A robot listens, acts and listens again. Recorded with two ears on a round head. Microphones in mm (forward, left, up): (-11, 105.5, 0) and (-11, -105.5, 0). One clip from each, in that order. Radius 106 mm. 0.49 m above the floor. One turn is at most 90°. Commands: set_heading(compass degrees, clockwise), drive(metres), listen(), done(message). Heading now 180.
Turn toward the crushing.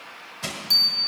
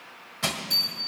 set_heading(210)
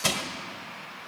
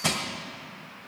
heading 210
set_heading(190)
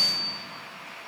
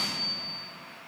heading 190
listen()
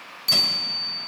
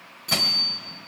listen()
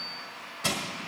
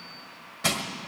done("Found it: crushing, straight ahead.")